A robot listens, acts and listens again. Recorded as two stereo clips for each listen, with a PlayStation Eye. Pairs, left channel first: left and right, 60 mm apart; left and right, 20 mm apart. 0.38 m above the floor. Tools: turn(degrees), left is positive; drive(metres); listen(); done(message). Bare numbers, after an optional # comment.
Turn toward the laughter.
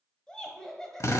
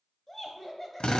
turn(30)
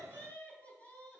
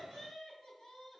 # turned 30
# So it is at 150° left.
turn(150)
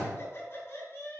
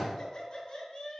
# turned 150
# The laughter is now 45° left.
turn(45)
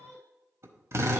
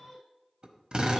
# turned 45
# The laughter is now 10° left.
turn(10)
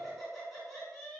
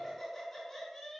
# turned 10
done("Facing the laughter, 2 to 4 m away.")